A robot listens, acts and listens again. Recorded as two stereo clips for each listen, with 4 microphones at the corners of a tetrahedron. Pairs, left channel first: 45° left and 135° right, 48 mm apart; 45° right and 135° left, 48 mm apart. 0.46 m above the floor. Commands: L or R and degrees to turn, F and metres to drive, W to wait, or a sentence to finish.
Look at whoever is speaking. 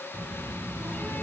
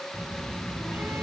R120
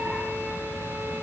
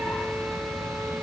W
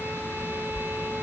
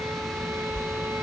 R30
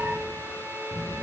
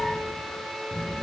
L10
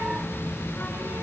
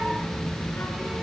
Facing the child speaking, 2 to 4 m away.